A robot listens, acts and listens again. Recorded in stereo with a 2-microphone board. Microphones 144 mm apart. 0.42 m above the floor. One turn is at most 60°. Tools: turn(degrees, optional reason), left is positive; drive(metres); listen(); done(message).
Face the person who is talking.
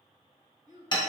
turn(degrees=60, reason="The child speaking: about 65° left or 115° left.")
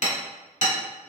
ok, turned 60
listen()
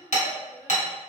turn(degrees=30, reason="So it is at 30° left.")
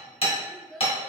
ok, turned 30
done("Facing the child speaking, 1 to 2 m away.")